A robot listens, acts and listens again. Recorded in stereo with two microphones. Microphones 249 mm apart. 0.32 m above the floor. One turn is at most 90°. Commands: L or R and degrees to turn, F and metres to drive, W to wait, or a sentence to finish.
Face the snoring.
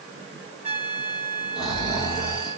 L30
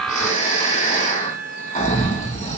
L90
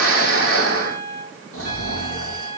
L65
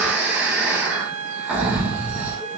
Found it: snoring, straight ahead.